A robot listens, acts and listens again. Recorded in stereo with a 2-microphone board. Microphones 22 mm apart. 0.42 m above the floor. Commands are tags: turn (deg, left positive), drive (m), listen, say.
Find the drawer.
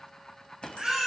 <turn deg="15"/>
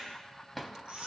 <say>Facing the drawer, 1 to 2 m away.</say>